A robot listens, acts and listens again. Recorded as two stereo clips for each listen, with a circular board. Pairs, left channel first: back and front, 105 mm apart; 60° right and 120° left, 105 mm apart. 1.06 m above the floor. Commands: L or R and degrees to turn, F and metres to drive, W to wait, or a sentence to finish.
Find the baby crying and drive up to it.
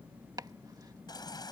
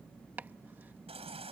L130
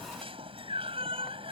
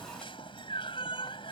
R25
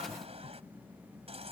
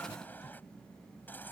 L10
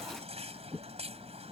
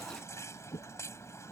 F1.0
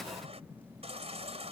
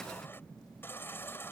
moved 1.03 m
L10
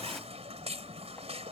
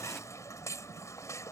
F1.0
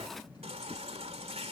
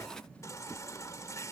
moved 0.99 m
F1.0
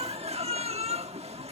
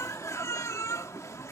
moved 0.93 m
F1.0
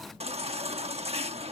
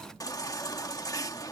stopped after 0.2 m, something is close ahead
Arrived at the baby crying, straight ahead.